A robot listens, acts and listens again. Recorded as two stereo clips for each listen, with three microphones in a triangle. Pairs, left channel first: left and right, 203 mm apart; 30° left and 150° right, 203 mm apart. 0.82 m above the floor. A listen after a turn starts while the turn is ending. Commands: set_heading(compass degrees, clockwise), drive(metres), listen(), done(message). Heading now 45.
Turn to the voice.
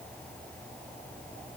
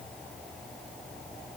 listen()
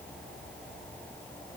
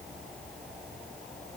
listen()
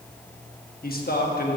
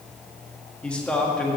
set_heading(290)
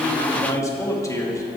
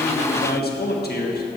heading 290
set_heading(270)
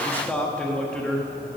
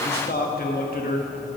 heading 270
done("Found it: a man speaking, straight ahead, 1 to 2 m away.")